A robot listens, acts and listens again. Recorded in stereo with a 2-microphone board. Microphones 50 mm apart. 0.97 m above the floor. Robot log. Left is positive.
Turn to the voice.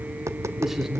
cmd yaw -30
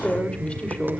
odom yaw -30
note: So it is at 25° left.
cmd yaw +25
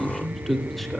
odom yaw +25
end: Facing the man speaking, 2 to 4 m away.